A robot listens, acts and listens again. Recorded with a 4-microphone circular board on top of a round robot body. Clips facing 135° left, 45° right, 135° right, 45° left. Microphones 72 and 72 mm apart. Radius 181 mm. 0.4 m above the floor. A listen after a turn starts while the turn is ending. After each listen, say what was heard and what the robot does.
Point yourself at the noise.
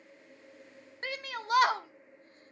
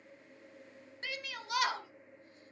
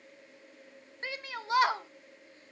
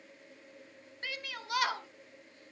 The shout: 170° left. Turn 170° left.
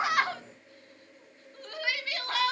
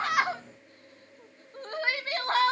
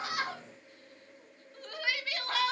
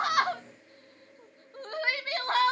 Found it: a shout, straight ahead.